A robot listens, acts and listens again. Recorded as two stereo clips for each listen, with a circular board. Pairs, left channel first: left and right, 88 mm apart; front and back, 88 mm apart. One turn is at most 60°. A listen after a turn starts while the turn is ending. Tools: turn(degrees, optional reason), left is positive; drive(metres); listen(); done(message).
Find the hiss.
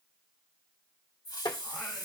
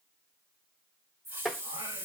turn(degrees=60, reason="The hiss: 125° left.")
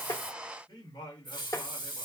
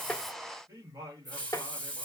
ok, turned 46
turn(degrees=60, reason="The hiss is now 75° left.")
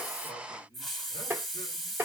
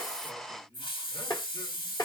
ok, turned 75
done("Found it: a hiss, straight ahead.")